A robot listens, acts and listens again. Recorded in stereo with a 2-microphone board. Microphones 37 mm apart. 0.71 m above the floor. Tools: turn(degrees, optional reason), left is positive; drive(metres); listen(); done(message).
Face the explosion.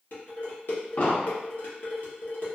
turn(degrees=60, reason="The explosion: about 60° left or 120° left.")
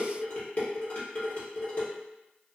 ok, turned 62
listen()
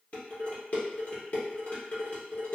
done("I heard an explosion, but can't make it out now. It was about 5° right or 60° left.")